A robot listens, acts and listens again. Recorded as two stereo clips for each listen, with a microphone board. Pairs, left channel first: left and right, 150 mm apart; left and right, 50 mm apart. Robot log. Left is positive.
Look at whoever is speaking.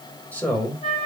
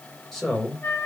cmd yaw +30
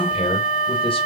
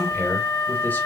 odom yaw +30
note: So it is at 140° left.
cmd yaw +140
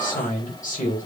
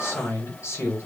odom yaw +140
note: The man speaking is now 65° left.
cmd yaw +65
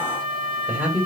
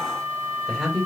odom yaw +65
note: The man speaking is now 10° right.
cmd yaw -10
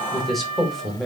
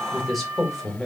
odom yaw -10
end: Facing the man speaking, 2 to 4 m away.